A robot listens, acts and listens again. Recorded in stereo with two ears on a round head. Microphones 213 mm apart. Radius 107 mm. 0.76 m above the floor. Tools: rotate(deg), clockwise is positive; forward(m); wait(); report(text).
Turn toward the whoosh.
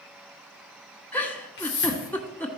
rotate(-50)
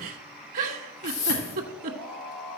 rotate(-75)
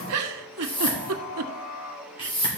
rotate(-25)
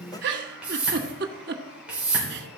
report("Facing the whoosh, 2 to 4 m away.")